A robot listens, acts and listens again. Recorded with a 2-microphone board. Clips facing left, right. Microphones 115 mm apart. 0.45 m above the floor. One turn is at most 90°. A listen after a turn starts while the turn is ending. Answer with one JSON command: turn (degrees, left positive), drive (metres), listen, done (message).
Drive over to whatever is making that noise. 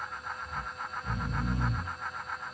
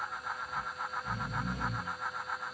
{"turn": 90}
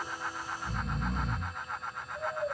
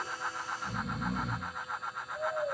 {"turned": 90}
{"drive": 1.0}
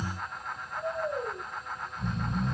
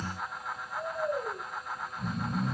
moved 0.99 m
{"drive": 1.0}
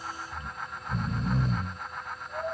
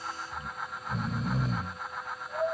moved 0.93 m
{"drive": 1.0}
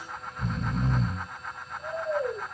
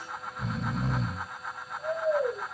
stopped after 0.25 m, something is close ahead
{"done": "I am next to the snoring."}